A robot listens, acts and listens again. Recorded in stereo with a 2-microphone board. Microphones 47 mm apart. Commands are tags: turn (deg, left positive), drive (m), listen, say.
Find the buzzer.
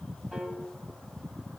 <listen/>
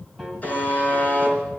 <turn deg="30"/>
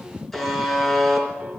<say>Facing the buzzer, 2 to 4 m away.</say>